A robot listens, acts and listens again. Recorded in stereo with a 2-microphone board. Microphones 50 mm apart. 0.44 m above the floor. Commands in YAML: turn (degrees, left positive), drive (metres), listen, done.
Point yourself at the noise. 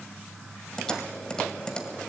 turn: 30
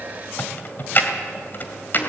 turn: 135
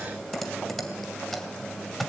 done: "Found it: typing on a keyboard, straight ahead."